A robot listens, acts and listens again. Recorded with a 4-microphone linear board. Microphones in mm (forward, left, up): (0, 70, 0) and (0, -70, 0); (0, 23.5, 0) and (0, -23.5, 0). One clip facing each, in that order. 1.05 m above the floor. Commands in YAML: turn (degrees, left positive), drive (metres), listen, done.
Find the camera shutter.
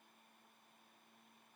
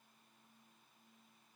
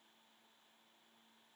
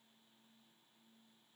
listen: true
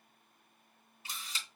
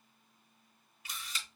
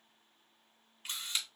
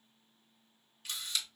turn: 30
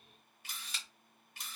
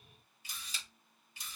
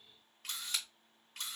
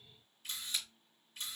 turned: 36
turn: 110
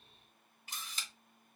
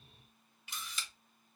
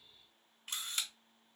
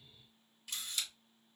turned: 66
turn: 45
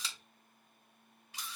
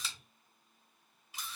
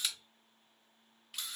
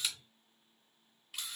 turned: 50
done: "Facing the camera shutter."